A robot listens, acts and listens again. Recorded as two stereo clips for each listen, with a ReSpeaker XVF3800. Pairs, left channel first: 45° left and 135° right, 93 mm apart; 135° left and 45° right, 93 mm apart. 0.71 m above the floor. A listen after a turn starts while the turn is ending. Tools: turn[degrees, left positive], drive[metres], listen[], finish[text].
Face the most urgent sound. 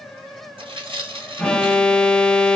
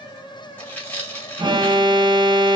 Thought: The alarm: 35° right.
Action: turn[-35]
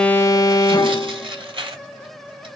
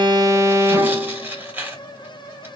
Action: finish[Facing the alarm.]